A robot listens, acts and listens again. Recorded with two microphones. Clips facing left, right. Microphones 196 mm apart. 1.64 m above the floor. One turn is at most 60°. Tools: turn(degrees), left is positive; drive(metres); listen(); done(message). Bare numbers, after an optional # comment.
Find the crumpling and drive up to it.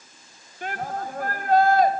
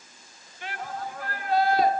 listen()
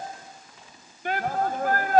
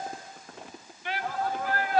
# The crumpling: about 65° right or 115° right.
turn(-60)
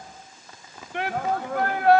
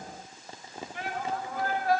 # So it is at 35° right.
turn(-35)
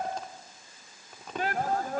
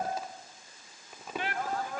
drive(1.0)
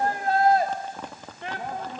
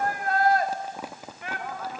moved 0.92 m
# The crumpling is now 10° right.
turn(-10)
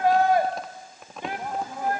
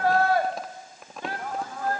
drive(1.0)
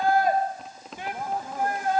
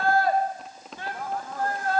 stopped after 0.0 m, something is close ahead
done("I am next to the crumpling.")